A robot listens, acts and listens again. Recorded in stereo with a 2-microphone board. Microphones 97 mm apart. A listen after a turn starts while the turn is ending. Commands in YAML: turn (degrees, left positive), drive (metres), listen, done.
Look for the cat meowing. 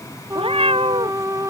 turn: -90
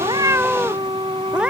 turn: -10
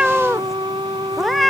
done: "Facing the cat meowing."